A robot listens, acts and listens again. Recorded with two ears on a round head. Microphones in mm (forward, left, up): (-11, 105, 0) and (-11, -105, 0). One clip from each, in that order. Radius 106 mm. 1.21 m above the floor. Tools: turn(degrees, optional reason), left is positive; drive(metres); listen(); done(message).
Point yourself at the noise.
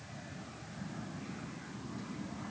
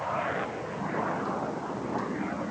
listen()
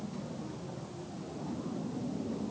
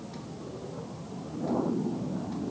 listen()
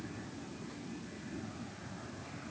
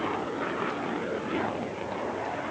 done("I can't make out anything to turn to.")